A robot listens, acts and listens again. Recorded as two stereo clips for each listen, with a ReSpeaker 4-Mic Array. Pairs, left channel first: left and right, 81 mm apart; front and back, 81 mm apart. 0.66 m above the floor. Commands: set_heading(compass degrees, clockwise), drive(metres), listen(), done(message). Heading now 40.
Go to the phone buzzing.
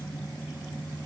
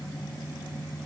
listen()
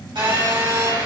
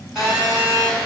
set_heading(135)
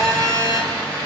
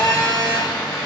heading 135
set_heading(170)
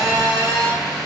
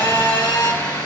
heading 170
drive(1.0)
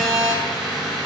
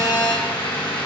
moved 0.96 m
drive(1.0)
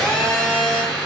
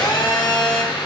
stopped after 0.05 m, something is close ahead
set_heading(160)
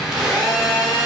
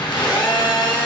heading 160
done("Arrived at the phone buzzing, straight ahead.")